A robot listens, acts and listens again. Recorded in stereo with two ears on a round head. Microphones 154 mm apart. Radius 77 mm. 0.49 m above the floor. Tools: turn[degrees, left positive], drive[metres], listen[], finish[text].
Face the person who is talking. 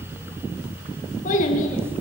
Thought: The child speaking: about 45° left or 135° left.
Action: turn[45]
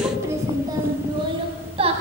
Thought: So it is at 35° right.
Action: turn[-35]
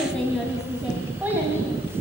Thought: The child speaking is now 15° right.
Action: turn[-15]
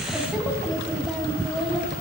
Action: finish[Facing the child speaking, 2 to 4 m away.]